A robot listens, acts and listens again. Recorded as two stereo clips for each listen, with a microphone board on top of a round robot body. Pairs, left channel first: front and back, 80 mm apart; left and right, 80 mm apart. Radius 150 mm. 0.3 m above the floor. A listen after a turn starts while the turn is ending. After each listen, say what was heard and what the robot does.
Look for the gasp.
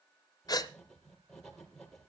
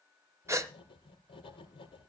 The gasp: 35° right. Turn 35° right.
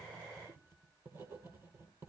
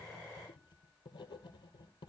I heard a gasp from this way, but can't make it out now.